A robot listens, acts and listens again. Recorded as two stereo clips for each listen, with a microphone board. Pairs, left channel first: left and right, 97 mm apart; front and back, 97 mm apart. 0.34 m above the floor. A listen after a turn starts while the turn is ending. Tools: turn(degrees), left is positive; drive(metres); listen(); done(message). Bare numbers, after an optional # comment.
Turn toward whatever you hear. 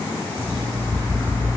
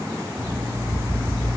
# The alarm clock: 125° left.
turn(125)
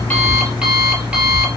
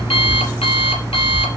# The alarm clock is now 10° right.
turn(-10)
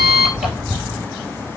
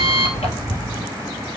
done("Facing the alarm clock, 2 to 4 m away.")